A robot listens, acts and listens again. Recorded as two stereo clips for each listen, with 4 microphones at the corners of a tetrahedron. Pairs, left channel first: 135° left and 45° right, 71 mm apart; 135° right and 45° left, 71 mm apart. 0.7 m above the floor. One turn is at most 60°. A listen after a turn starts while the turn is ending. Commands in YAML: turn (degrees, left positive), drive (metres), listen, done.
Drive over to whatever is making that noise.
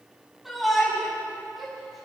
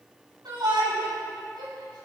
turn: 45
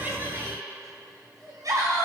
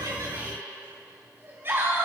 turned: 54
turn: -10
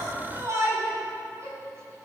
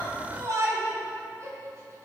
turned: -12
drive: 1.0
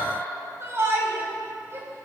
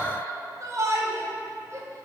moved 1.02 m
drive: 1.0
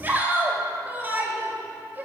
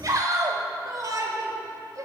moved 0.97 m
turn: 15
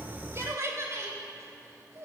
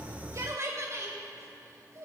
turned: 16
drive: 1.0
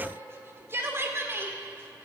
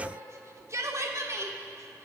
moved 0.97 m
drive: 1.0
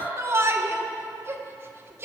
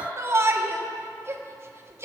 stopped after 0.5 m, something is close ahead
done: "I am next to the shout."